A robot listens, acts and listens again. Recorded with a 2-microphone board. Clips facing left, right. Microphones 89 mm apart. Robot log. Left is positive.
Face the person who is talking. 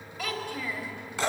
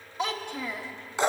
note: The child speaking: about 25° right or 155° right.
cmd yaw -25
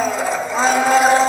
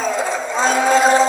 cmd idle
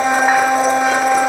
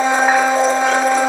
cmd idle
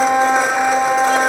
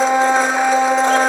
end: I heard a child speaking, but can't make it out now. It was about straight ahead or 130° right.